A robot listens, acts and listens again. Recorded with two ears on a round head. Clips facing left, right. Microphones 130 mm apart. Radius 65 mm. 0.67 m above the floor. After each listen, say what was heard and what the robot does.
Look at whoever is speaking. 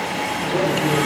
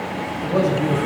Turn 90° right.
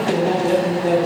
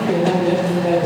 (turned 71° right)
So it is at 20° right. Turn 20° right.
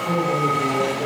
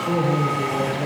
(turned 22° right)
Facing the man speaking.